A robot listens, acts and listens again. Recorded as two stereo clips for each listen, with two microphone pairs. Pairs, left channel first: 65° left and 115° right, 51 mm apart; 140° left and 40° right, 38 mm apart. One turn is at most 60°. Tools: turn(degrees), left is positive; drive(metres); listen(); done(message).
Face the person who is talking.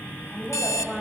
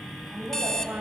turn(degrees=-15)
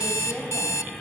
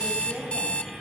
done("Facing the woman speaking.")